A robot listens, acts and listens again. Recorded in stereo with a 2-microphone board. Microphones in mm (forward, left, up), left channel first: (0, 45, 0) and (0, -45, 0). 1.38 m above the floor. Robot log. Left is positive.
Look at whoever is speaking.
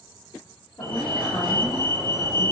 note: The woman speaking: about 55° left or 125° left.
cmd yaw +55
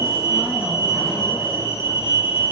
cmd idle
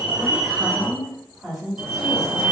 end: Facing the woman speaking, 1 to 2 m away.